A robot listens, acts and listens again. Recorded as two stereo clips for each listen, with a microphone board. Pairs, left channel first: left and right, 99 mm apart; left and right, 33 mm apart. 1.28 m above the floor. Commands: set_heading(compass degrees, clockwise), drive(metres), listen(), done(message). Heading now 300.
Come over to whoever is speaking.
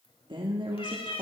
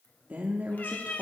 set_heading(355)
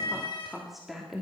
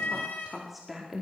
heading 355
drive(1.0)
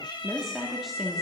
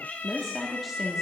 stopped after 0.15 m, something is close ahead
done("Something is in my way. I am facing the woman speaking but have not reached it.")